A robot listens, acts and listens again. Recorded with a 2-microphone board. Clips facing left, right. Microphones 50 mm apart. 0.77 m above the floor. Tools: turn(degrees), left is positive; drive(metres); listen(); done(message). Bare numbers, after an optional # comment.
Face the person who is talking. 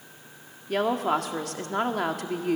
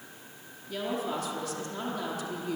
# The woman speaking: about 65° left or 115° left.
turn(65)
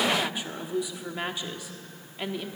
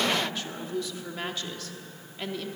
# So it is at 15° left.
turn(15)
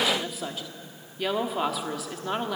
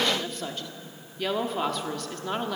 done("Found it: a woman speaking, straight ahead.")